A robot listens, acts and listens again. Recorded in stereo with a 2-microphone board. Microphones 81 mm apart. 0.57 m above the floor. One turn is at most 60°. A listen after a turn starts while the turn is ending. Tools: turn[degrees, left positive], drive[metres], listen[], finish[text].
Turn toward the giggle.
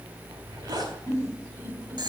Thought: The giggle: about 30° left or 150° left.
Action: turn[30]
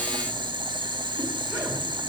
Action: listen[]
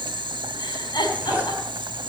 Thought: So it is at 120° left.
Action: turn[60]
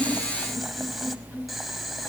Thought: Nothing new. It was at 60° left.
Action: turn[60]
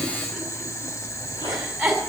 Action: finish[Facing the giggle, over 4 m away.]